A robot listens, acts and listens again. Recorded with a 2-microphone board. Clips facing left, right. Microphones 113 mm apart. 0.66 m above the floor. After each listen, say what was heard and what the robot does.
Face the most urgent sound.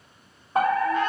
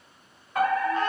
The fire alarm: about 30° left or 150° left. Turn 30° left.
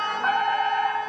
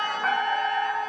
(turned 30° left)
So it is at 10° left. Turn 10° left.
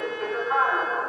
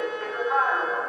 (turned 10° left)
Found it: a fire alarm, straight ahead, 2 to 4 m away.